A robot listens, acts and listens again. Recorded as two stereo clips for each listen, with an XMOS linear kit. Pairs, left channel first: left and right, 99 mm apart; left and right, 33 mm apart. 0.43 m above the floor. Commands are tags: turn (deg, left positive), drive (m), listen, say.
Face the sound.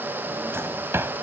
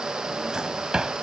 <turn deg="-25"/>
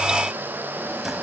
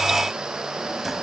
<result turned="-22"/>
<listen/>
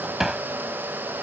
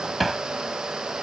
<say>Facing the drawer.</say>